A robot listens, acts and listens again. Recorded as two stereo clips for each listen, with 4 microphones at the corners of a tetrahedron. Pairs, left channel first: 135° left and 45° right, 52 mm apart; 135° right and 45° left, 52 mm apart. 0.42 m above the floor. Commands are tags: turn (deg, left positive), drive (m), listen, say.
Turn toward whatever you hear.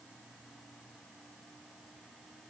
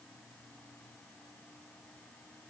<listen/>
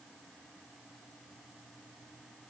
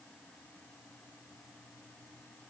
<listen/>
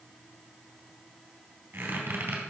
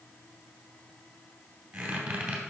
<turn deg="-25"/>
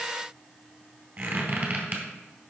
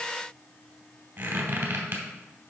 <say>Found it: a squeak, straight ahead.</say>